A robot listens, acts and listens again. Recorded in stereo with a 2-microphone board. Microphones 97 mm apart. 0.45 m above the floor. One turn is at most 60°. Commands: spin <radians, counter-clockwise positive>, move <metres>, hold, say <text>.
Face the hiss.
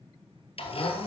hold
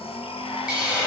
spin -0.52
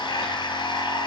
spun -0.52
hold
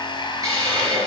spin -1.05
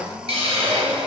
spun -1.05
spin -1.05
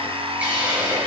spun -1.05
spin -0.26
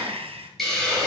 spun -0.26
say Facing the hiss, over 4 m away.